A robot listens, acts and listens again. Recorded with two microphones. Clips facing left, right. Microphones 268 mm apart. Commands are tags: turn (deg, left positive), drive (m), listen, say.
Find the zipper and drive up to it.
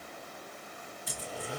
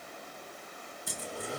<turn deg="-50"/>
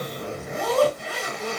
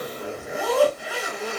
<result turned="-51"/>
<drive m="1.0"/>
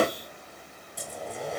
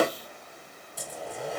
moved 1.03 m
<drive m="1.0"/>
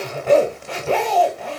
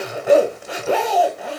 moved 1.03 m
<turn deg="-10"/>
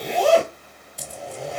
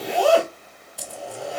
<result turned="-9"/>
<drive m="1.0"/>
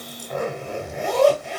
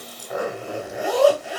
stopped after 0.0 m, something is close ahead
<say>I am next to the zipper.</say>